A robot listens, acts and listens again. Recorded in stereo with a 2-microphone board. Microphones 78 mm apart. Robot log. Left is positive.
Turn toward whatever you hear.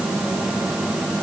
cmd idle
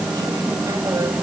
cmd idle
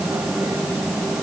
end: I can't make out anything.